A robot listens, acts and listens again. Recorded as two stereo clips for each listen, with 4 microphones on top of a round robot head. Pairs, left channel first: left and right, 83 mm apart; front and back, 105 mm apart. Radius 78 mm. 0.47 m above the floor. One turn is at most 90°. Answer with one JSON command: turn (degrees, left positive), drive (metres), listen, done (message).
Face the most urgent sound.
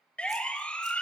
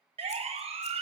{"turn": 90}
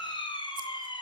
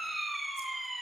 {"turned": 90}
{"turn": 90}
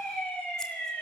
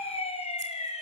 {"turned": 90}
{"turn": 10}
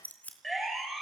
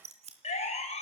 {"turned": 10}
{"done": "Found it: a siren, straight ahead."}